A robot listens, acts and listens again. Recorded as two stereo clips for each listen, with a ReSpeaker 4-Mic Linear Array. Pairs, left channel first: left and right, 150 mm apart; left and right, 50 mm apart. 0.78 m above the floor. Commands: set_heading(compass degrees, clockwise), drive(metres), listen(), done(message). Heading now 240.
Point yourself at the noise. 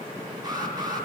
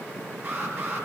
set_heading(265)
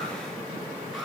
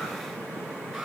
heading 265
listen()
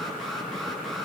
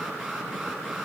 done("Found it: an alarm, straight ahead.")